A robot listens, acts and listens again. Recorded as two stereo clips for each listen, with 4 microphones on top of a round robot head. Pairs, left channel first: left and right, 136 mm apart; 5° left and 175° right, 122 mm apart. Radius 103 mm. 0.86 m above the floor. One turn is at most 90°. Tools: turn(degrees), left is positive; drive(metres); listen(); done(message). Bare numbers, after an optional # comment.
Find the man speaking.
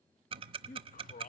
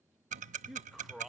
# The man speaking: 100° left.
turn(90)
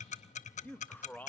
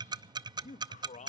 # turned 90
# The man speaking is now 15° left.
turn(15)
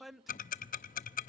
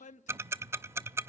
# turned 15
done("Found it: a man speaking, straight ahead, under 1 m away.")